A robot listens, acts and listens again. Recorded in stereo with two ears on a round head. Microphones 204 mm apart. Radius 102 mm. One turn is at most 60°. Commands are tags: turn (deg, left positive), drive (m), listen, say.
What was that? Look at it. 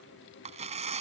<turn deg="-30"/>
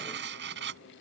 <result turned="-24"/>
<turn deg="-60"/>
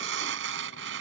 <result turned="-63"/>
<turn deg="-60"/>
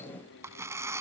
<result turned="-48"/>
<turn deg="-15"/>
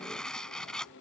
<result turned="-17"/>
<say>Found it: tearing paper, straight ahead.</say>